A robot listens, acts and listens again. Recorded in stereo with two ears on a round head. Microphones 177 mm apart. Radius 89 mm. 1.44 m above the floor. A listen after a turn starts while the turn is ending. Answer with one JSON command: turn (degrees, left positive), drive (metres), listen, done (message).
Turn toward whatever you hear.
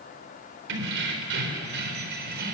{"turn": -55}
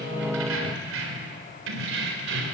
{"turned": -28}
{"turn": -70}
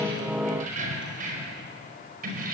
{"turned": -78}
{"turn": -45}
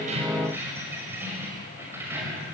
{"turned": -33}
{"turn": -10}
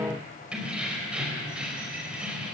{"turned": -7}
{"done": "Facing the keys jangling."}